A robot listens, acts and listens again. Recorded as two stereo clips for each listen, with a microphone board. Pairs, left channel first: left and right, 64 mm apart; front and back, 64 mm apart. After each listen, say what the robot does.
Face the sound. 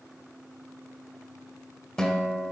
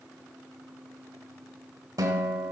Turn 170° left.
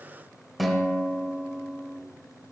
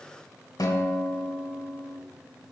Found it: a guitar, straight ahead.